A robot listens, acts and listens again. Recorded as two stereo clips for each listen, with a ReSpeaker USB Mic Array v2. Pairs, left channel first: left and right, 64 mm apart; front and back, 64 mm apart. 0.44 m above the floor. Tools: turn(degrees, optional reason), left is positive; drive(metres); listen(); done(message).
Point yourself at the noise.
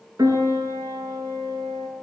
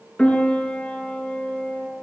turn(degrees=-70, reason="The piano: 70° right.")
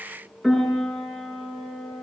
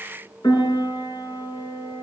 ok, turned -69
done("Found it: a piano, straight ahead.")